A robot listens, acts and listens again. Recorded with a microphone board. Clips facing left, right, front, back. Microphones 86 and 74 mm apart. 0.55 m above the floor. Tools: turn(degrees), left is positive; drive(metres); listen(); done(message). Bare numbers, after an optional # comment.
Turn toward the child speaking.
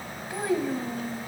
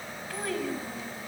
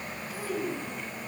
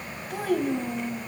# The child speaking: 155° left.
turn(155)
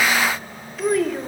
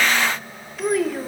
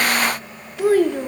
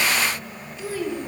done("Facing the child speaking, 1 to 2 m away.")